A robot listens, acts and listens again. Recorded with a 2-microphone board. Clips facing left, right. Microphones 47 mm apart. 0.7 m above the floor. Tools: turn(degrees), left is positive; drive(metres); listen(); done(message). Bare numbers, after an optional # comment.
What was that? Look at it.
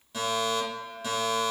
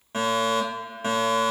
# The fire alarm: about 45° right or 135° right.
turn(-45)
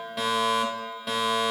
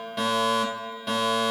done("Facing the fire alarm.")